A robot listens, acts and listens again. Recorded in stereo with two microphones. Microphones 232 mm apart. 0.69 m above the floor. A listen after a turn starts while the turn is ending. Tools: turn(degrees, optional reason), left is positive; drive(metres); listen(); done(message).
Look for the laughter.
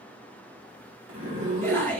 turn(degrees=30)
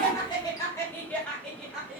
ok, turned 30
turn(degrees=-30)
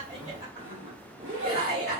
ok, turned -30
turn(degrees=-130, reason="So it is at 130° right.")
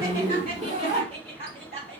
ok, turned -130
turn(degrees=-30, reason="The laughter is now 30° right.")
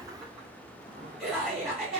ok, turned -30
done("Facing the laughter, 2 to 4 m away.")